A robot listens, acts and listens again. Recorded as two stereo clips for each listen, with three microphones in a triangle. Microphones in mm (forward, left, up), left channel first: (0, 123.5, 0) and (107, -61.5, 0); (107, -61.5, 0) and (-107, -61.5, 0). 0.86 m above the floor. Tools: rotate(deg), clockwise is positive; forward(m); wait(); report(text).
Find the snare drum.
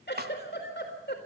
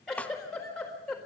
rotate(85)
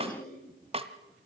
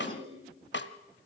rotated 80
report("Facing the snare drum, 1 to 2 m away.")